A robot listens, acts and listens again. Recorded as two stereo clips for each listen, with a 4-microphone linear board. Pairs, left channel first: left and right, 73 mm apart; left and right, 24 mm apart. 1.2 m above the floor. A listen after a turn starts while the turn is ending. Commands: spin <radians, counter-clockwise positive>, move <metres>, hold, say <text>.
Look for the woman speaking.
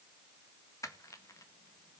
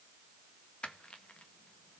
hold
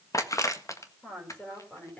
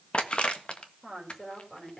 spin 0.35
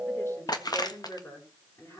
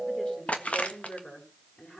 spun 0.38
spin 2.36
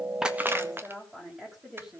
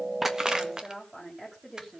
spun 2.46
spin -0.17
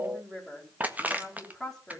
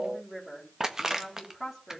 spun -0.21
say Facing the woman speaking, over 4 m away.